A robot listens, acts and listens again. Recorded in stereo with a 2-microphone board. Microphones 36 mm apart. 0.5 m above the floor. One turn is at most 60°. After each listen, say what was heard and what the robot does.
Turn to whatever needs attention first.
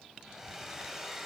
Keep listening.
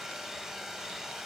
Keep listening.
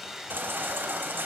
The baby crying: about 70° right or 110° right. Turn 60° right.
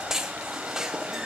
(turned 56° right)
So it is at 15° right. Turn 15° right.
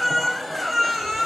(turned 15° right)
Found it: a baby crying, straight ahead, under 1 m away.